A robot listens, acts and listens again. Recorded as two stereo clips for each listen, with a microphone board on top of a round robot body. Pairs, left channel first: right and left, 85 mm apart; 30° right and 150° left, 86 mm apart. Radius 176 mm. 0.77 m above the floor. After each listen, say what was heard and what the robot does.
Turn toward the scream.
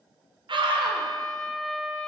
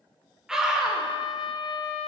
The scream: 70° left. Turn 70° left.
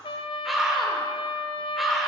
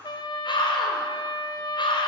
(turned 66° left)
Found it: a scream, straight ahead.